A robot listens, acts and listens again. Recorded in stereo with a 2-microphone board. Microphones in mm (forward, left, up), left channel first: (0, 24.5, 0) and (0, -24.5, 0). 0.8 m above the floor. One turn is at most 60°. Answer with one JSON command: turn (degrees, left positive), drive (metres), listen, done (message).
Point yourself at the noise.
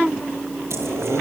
{"turn": -60}
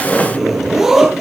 {"turn": -10}
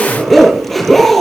{"done": "Facing the zipper, over 4 m away."}